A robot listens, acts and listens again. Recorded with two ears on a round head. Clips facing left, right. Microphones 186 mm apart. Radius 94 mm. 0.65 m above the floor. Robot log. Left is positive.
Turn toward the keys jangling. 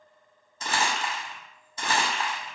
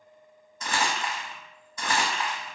cmd idle
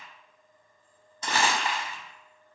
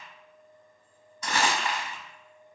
cmd idle
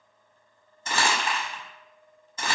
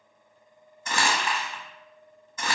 end: I can't make out keys jangling, only crumpling.